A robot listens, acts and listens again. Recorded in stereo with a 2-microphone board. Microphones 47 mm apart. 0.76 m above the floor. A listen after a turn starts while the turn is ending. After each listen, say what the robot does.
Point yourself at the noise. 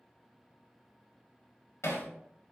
Turn 65° left.
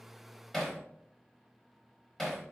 Turn 10° left.
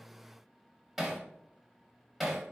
Found it: hammering, straight ahead.